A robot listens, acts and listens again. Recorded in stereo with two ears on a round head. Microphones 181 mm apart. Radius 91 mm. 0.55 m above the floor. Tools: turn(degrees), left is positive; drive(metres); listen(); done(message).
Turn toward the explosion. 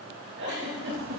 listen()
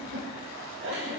listen()
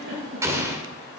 turn(degrees=-30)
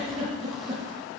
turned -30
listen()
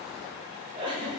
done("I heard an explosion, but can't make it out now. It was about 15° left or 135° right.")